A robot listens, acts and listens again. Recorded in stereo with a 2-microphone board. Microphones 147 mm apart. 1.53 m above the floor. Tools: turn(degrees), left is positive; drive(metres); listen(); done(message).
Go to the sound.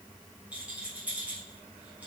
turn(degrees=-30)
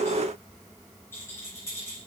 turn(degrees=20)
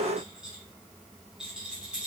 drive(metres=1.0)
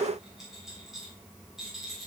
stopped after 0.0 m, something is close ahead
done("Blocked. The rattle is further on, straight ahead.")